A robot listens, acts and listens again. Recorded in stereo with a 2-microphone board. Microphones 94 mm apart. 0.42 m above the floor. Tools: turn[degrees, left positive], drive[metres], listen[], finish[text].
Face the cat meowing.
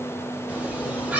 Action: turn[-30]
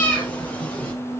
Thought: So it is at 15° left.
Action: turn[15]
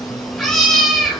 Action: finish[Facing the cat meowing, 2 to 4 m away.]